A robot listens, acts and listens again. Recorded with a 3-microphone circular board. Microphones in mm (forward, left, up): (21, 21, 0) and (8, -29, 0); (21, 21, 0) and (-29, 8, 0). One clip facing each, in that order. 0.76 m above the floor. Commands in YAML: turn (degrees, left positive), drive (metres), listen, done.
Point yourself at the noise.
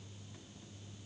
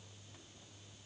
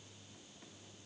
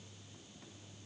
listen: true
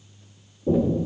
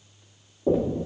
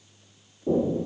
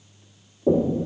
turn: -130
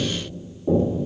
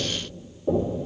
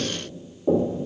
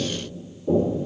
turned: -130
turn: -15
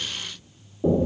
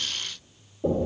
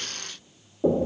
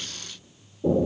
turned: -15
done: "Facing the knocking, 1 to 2 m away."